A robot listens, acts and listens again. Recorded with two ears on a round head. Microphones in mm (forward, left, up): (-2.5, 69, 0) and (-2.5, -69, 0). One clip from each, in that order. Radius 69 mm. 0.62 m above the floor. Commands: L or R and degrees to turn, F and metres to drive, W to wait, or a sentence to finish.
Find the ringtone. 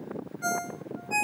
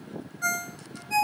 R90
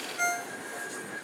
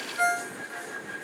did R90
Facing the ringtone, 2 to 4 m away.